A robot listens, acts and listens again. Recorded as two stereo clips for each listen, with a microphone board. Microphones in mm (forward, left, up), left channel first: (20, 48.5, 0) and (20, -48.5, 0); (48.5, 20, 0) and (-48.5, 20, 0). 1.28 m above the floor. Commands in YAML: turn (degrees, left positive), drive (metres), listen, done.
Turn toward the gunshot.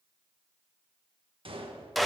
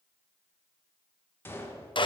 turn: -65
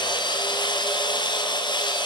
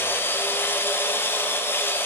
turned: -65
done: "Facing where the gunshot came from. I can't hear it now."